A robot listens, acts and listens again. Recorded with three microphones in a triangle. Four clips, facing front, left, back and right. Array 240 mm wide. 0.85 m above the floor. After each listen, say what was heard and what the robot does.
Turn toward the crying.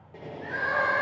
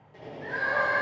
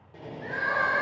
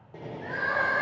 The crying: 160° right. Turn 160° right.
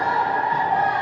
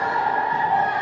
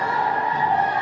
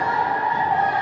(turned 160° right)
The crying is now 35° right. Turn 35° right.
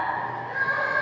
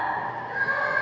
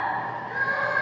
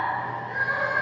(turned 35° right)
The crying is now 10° right. Turn 10° right.
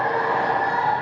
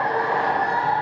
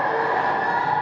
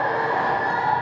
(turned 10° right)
Facing the crying.